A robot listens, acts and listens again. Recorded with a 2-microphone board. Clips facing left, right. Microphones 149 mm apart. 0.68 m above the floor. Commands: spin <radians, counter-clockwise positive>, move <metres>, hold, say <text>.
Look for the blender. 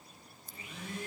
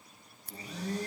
spin -0.61
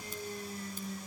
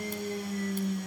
spin -1.92
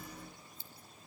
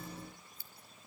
hold
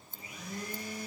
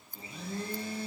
spin -0.52
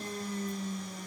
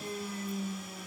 say Found it: a blender, straight ahead.